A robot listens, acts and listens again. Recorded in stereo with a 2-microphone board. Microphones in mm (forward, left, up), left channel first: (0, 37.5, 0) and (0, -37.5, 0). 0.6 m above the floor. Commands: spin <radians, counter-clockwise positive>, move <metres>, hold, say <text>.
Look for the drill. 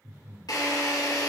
spin 1.05
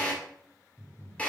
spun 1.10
spin 0.44
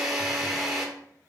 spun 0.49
say Found it: a drill, straight ahead.